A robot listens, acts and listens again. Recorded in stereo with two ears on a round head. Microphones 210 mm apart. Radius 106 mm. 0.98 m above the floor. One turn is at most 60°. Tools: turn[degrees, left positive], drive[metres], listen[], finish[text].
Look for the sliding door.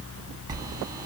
Thought: The sliding door: about 15° right or 165° right.
Action: turn[-15]
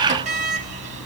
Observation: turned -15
Thought: So it is at 150° right.
Action: turn[-60]
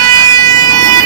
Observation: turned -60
Thought: The sliding door is now 120° right.
Action: turn[-60]
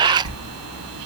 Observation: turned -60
Thought: The sliding door is now 65° right.
Action: turn[-60]
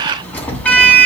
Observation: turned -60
Action: finish[Found it: a sliding door, straight ahead, 1 to 2 m away.]